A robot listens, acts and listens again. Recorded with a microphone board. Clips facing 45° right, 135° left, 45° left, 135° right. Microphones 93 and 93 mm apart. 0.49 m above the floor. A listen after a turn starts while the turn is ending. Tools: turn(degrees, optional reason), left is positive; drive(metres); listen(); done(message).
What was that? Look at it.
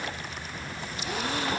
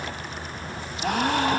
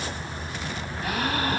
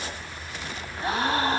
turn(degrees=165, reason="The gasp: 165° left.")
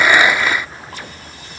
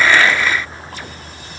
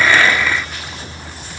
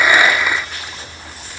done("I heard a gasp from this way, but can't make it out now.")